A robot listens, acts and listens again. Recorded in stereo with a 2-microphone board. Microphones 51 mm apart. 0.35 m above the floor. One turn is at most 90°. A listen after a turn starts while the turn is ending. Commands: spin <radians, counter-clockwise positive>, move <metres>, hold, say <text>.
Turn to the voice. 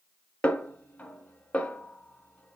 hold
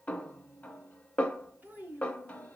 spin -0.52
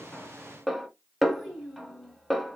say Found it: a child speaking, straight ahead.